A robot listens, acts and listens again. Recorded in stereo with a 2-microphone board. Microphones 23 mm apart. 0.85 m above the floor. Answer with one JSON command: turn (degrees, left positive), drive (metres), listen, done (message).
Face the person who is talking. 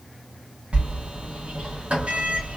{"listen": true}
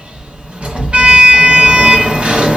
{"listen": true}
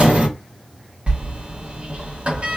{"done": "I can't make out anyone speaking, only a sliding door."}